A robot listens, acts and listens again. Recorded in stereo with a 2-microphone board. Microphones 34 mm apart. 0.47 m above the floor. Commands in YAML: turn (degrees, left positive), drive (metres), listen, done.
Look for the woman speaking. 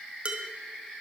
listen: true
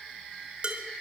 listen: true
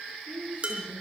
turn: -45
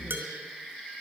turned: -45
listen: true
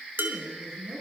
done: "Found it: a woman speaking, straight ahead, over 4 m away."